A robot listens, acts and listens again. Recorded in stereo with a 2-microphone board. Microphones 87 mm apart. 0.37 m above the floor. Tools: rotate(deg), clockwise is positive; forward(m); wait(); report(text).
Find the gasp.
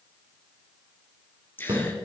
rotate(-20)
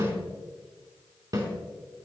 wait()
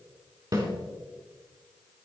report("I heard a gasp, but can't make it out now. It was about straight ahead or 140° left.")